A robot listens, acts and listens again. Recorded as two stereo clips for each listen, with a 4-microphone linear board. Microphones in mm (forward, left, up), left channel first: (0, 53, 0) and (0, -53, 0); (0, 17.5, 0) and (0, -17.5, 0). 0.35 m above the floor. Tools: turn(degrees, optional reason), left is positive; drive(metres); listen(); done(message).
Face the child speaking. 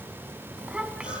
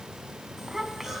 turn(degrees=-30)
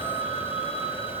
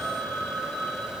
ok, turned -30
listen()
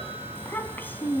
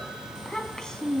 turn(degrees=20, reason="So it is at 20° left.")
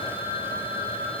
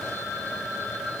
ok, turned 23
listen()
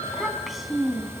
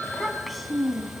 done("Facing the child speaking.")